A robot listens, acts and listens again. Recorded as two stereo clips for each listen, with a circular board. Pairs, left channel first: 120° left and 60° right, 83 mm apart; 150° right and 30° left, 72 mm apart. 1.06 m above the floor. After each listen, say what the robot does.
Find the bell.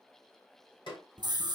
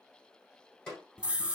Keep listening.
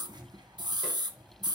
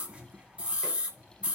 Keep listening.
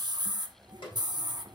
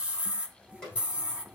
I can't make out a bell, only a snare drum and a scream.